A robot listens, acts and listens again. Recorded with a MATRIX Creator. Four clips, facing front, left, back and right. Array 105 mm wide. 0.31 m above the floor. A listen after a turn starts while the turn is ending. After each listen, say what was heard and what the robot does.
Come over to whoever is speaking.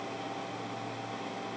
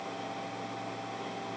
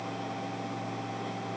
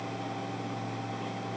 Keep listening.
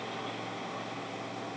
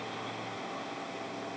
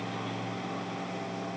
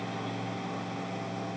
Keep listening.
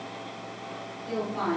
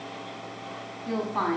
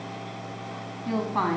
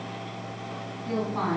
The woman speaking: 160° left. Turn 160° left.
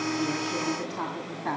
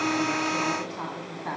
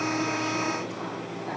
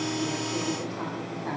The woman speaking is now 20° left. Turn 20° left.
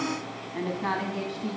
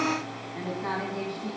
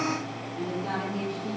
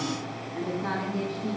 The woman speaking is now 10° left. Turn 10° left.
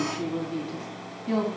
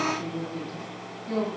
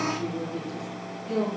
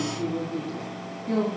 Drive 1.0 m forward.
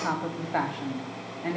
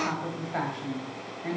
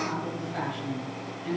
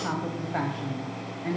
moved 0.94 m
Drive 1.0 m forward.
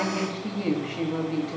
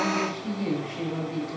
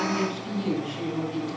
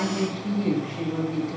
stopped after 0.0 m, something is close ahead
I am next to the woman speaking.